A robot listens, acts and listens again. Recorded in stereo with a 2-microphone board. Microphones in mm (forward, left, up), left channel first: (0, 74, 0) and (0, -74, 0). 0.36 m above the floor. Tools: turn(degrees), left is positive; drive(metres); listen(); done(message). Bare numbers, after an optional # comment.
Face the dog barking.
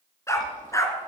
# The dog barking: about 25° left or 155° left.
turn(25)
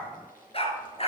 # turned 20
# So it is at 135° left.
turn(135)
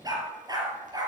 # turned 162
# The dog barking is now 30° right.
turn(-30)
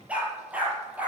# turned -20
# The dog barking is now 10° right.
turn(-10)
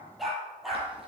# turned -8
done("Found it: a dog barking, straight ahead.")